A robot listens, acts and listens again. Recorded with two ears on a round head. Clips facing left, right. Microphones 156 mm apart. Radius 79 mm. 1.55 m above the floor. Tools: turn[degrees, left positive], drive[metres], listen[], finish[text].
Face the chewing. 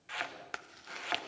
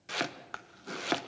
Thought: The chewing: about 20° left or 160° left.
Action: turn[20]
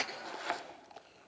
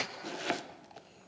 Action: finish[Found it: chewing, straight ahead, under 1 m away.]